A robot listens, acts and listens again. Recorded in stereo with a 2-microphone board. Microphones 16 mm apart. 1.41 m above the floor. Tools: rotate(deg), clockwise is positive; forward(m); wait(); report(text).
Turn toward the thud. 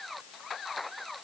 wait()
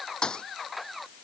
rotate(-65)
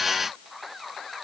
wait()
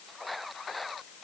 report("I heard a thud, but can't make it out now. It was about straight ahead or 50° left.")